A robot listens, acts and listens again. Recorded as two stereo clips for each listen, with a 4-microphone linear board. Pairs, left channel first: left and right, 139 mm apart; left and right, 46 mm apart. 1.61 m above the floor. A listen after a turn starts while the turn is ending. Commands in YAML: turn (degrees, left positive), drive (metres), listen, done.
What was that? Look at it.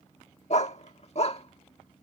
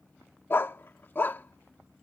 turn: 50
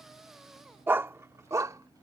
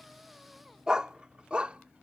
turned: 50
turn: -25
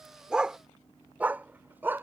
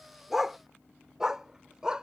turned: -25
turn: -15
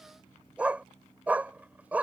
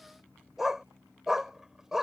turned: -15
turn: -10
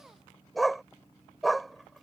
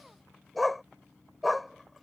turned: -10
done: "Facing the dog barking."